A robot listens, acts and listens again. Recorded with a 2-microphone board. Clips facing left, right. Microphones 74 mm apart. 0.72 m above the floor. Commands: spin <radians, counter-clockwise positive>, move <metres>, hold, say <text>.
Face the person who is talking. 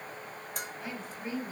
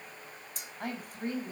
spin -0.87
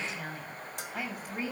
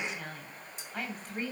say Facing the woman speaking.